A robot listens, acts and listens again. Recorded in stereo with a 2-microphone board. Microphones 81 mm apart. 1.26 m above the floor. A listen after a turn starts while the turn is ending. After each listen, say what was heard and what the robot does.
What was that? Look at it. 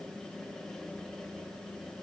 Keep listening.
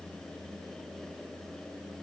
Keep listening.
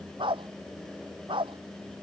Turn 90° right.
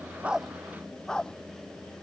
So it is at 10° left. Turn 10° left.
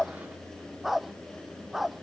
Found it: a dog barking, straight ahead.